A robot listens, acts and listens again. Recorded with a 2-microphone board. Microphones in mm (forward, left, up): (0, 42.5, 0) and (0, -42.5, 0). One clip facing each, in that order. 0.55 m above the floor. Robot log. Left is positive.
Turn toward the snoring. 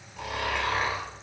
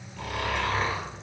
cmd yaw +30
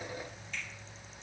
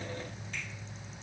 cmd idle
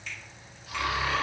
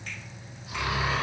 note: So it is at 20° right.
cmd yaw -20
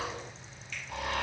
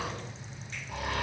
end: Found it: snoring, straight ahead, 1 to 2 m away.